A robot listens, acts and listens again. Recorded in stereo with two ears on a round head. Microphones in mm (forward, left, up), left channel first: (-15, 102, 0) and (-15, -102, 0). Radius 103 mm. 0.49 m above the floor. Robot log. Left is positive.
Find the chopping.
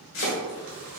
note: The chopping: about 60° left or 120° left.
cmd yaw +60
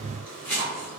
note: So it is at 10° left.
cmd yaw +10
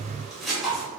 end: Found it: chopping, straight ahead.